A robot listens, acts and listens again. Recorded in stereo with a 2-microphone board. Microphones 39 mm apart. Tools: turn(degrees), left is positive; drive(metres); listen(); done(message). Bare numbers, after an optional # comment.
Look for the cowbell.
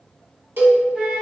# The cowbell: about 60° right or 120° right.
turn(-60)
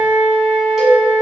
# So it is at 10° right.
turn(-10)
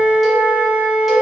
listen()
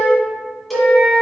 done("Facing the cowbell, under 1 m away.")